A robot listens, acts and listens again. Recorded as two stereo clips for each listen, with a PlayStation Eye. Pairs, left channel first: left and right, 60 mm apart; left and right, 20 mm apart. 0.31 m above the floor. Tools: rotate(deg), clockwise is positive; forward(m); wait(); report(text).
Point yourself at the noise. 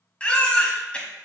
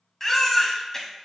rotate(-20)
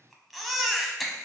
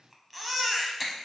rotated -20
report("Found it: a baby crying, straight ahead.")